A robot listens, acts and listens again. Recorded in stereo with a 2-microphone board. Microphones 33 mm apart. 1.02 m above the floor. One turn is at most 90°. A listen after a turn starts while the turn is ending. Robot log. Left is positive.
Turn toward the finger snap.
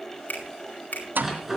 note: The finger snap: about 65° left or 115° left.
cmd yaw +65
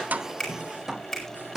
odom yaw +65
end: Facing the finger snap.